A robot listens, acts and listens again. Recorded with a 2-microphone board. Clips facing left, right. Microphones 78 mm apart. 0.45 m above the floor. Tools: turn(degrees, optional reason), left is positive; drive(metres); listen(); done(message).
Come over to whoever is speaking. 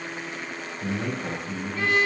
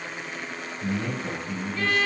turn(degrees=35, reason="The man speaking: about 35° left or 145° left.")
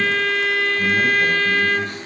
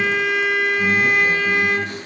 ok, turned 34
listen()
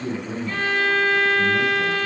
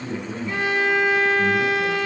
turn(degrees=110, reason="So it is at 110° left.")
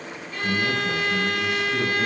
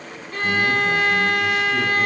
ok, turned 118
turn(degrees=-10, reason="Nothing new. It was at 10° right.")
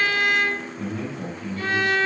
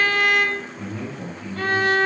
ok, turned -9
drive(metres=1.0)
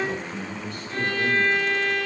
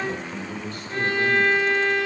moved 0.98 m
drive(metres=1.0)
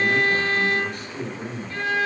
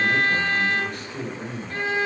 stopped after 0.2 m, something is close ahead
done("Arrived at the man speaking, straight ahead.")